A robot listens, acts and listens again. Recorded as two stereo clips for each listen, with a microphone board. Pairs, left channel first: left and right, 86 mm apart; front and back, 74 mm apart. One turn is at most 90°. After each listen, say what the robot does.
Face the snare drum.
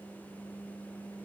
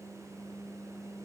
Keep listening.
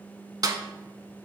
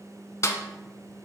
Turn 50° right.
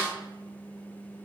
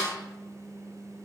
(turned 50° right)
Keep listening.
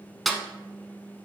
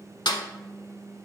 Found it: a snare drum, straight ahead, under 1 m away.